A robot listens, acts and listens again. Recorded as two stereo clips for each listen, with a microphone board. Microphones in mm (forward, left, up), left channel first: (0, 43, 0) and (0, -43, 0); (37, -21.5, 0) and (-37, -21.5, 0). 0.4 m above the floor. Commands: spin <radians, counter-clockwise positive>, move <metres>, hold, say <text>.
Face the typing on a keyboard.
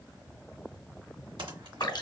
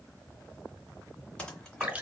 hold
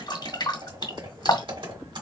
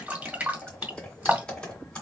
spin -1.31
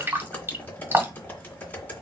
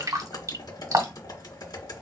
spin 0.35
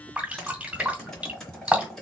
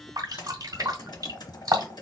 spin 0.17
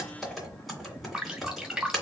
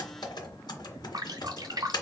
say Facing the typing on a keyboard.